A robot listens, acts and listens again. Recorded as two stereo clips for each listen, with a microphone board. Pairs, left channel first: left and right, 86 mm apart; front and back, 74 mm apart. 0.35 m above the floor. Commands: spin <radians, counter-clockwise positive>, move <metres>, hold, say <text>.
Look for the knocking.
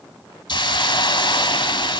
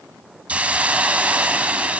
hold
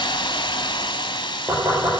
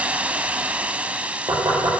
spin -2.53
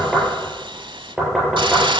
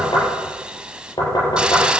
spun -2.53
say Facing the knocking.